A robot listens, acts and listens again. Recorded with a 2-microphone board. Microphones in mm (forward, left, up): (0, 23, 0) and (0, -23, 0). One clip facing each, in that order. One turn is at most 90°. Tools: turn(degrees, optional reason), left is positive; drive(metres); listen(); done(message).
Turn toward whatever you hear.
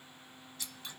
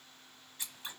turn(degrees=-30, reason="The scissors: about 30° right or 150° right.")
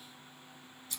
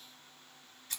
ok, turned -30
turn(degrees=-90, reason="So it is at 125° right.")
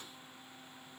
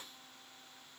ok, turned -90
turn(degrees=-35, reason="Nothing new. It was at 35° right.")
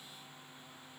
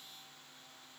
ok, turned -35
listen()
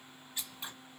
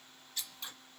turn(degrees=20, reason="The scissors is now 20° left.")
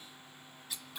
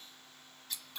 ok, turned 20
done("Facing the scissors.")